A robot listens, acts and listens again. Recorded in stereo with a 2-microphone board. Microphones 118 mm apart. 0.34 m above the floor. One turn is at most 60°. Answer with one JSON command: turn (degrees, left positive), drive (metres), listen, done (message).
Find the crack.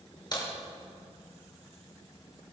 {"turn": 40}
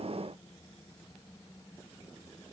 {"listen": true}
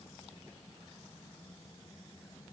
{"done": "I heard a crack, but can't make it out now. It was about straight ahead or 100° left."}